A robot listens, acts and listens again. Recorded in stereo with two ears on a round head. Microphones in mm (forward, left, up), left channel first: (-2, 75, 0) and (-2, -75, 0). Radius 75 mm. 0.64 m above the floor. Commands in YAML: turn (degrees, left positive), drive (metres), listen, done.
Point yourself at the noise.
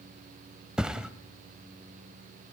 turn: -30
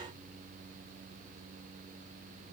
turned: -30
listen: true
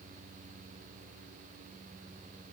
done: "I heard a thud, but can't make it out now. It was about 25° left or 145° right."